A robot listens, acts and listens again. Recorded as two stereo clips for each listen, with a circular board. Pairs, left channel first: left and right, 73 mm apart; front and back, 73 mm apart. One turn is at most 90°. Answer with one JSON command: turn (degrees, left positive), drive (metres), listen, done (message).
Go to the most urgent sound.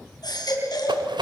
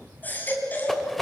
{"turn": 65}
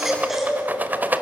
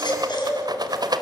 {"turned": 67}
{"drive": 1.0}
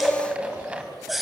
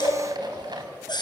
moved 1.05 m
{"drive": 1.0}
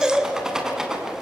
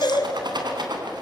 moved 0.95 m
{"turn": -10}
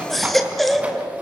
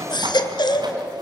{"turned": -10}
{"drive": 1.0}
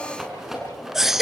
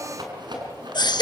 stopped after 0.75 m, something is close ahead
{"done": "Arrived at the baby crying, straight ahead."}